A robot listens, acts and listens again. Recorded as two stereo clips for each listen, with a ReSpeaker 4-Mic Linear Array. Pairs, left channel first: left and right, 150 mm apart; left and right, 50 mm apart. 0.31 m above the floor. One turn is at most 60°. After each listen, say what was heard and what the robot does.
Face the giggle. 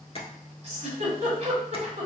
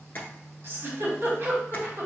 The giggle: about 50° right or 130° right. Turn 50° right.
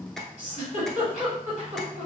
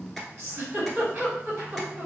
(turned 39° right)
So it is at 75° right. Turn 60° right.
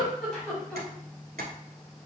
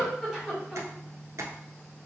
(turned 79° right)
Found it: a giggle, straight ahead, 1 to 2 m away.